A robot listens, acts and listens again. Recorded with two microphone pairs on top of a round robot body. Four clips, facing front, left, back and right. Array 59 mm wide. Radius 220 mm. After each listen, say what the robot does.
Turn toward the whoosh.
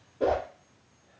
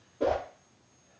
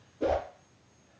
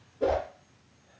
Turn 45° left.
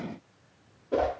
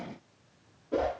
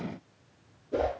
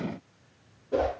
Facing the whoosh, 1 to 2 m away.